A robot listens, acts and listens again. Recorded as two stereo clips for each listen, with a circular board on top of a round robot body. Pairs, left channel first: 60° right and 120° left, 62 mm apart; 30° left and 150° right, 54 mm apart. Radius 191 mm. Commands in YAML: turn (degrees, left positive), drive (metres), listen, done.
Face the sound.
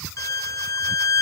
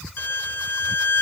turn: -20
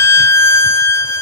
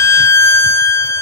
turn: -10
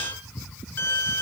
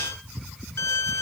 done: "Found it: a violin, straight ahead."